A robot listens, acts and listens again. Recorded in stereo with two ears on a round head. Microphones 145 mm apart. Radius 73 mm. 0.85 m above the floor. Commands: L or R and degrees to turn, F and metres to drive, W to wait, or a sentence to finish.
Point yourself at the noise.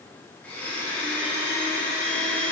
L30
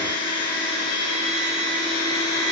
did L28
L140
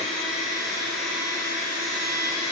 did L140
Found it: a blender, straight ahead, 1 to 2 m away.